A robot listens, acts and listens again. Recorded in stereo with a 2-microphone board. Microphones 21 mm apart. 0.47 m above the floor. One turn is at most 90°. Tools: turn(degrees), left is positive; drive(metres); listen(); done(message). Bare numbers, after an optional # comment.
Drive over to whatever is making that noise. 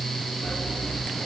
# The sawing: about 60° left or 120° left.
turn(60)
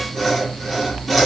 drive(1.0)
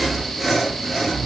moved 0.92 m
drive(1.0)
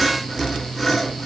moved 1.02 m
drive(1.0)
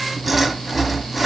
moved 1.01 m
# The sawing is now 10° right.
turn(-10)
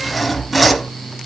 drive(1.0)
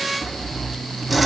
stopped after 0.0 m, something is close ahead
done("I am next to the sawing.")